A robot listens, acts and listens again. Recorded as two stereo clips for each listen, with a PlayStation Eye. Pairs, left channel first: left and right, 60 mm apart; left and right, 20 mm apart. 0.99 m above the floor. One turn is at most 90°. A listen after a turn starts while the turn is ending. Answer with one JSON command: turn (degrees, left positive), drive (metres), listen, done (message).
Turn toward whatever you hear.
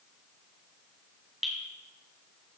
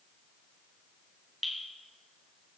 {"turn": 30}
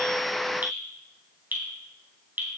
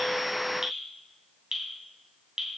{"turn": -35}
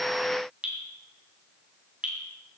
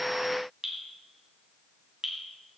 {"turn": -20}
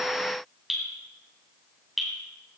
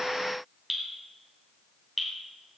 {"done": "Found it: dripping, straight ahead."}